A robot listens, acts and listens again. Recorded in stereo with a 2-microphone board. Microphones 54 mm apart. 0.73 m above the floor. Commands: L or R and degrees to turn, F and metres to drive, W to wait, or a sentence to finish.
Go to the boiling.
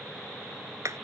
W
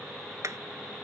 W
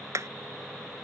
I can't make out boiling, only hammering.